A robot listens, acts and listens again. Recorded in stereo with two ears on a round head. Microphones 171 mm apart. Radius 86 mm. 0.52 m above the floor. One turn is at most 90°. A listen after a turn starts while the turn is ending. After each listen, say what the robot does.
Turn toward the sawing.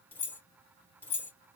Keep listening.
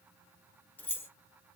Keep listening.
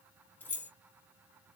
I can't make out sawing, only keys jangling.